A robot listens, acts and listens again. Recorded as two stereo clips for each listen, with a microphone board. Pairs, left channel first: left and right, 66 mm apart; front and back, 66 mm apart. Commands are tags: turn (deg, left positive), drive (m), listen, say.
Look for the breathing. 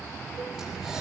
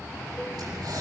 <turn deg="-175"/>
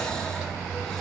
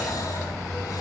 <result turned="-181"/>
<turn deg="10"/>
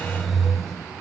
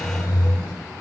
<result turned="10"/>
<say>Found it: breathing, straight ahead.</say>